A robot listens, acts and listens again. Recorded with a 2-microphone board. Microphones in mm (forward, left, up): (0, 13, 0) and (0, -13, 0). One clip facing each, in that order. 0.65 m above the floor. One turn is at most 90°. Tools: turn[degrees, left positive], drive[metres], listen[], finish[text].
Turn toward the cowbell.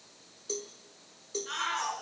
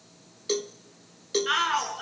Action: turn[-90]
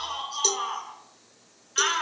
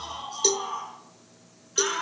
Thought: So it is at 15° right.
Action: turn[-15]
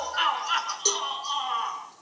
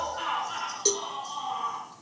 Action: finish[Facing the cowbell.]